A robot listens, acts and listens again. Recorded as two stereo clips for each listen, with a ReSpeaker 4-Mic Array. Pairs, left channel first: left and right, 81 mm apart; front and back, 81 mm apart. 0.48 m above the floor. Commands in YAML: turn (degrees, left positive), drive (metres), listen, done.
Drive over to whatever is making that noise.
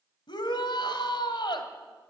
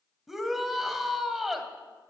turn: 95
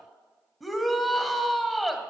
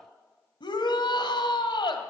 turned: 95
drive: 1.0
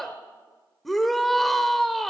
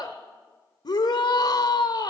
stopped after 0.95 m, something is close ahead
done: "Arrived at the shout, straight ahead."